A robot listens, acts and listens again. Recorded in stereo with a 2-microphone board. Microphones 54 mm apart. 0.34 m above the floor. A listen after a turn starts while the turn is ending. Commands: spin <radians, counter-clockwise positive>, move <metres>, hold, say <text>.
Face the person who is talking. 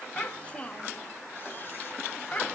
spin 0.44
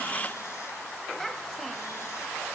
say Facing the child speaking, 1 to 2 m away.